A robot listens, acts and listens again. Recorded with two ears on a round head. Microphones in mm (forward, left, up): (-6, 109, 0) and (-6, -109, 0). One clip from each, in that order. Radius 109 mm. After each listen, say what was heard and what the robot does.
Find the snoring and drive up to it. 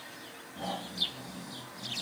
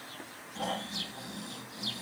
The snoring: about 45° right or 135° right. Turn 45° right.
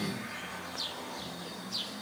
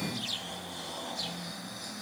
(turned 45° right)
So it is at 90° right. Turn 90° right.
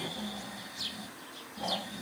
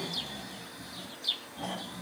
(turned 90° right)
Drive 1.0 m forward.
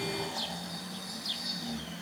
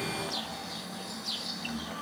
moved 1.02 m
The snoring is now 10° left. Turn 10° left.
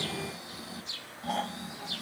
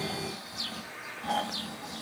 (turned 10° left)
Drive 1.0 m forward.
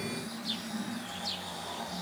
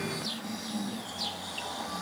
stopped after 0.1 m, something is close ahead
The snoring is now 10° right. Turn 10° right.
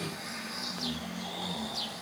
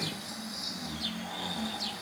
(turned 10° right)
I am next to the snoring.